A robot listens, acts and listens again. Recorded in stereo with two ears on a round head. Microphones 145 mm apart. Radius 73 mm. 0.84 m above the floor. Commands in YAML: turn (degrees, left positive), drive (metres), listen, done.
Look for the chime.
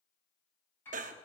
listen: true
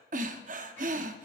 listen: true
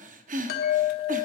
turn: 70
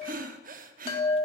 turn: 35
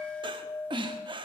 turn: 10
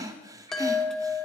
done: "Facing the chime, 1 to 2 m away."